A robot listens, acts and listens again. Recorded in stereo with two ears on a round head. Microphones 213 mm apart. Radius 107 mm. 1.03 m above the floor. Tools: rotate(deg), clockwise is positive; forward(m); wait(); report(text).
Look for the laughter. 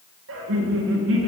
rotate(55)
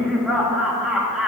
report("Found it: laughter, straight ahead, 1 to 2 m away.")